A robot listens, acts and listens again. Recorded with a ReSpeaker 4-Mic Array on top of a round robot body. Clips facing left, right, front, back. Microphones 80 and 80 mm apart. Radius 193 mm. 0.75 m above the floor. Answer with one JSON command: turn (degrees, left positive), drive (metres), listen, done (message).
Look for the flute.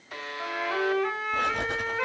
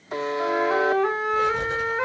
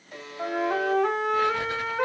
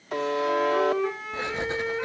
{"turn": -20}
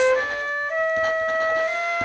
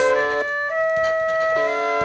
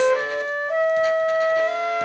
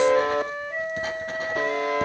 {"done": "Facing the flute."}